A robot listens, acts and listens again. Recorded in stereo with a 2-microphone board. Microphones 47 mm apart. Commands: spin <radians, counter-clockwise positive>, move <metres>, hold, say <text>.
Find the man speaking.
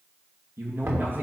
spin -0.79
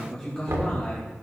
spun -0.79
spin 0.44
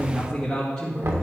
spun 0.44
spin 0.44
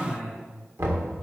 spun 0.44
say Found it: a man speaking, straight ahead, 2 to 4 m away.